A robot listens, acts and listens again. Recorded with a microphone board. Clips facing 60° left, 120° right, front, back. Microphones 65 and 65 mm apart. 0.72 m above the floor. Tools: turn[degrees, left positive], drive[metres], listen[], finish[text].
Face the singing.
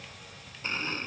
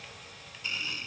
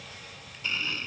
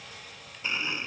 Action: listen[]
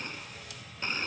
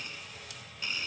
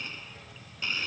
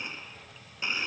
Action: listen[]
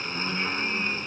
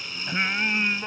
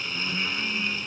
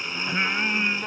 Thought: The singing: 155° right.
Action: turn[-155]
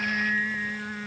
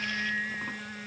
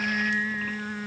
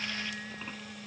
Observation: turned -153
Action: finish[Facing the singing.]